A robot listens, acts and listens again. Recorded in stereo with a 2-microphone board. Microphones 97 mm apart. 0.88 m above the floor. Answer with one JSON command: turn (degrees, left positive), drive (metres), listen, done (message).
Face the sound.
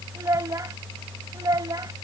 {"turn": -40}
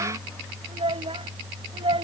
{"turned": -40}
{"turn": -95}
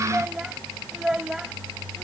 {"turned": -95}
{"done": "Found it: a child speaking, straight ahead."}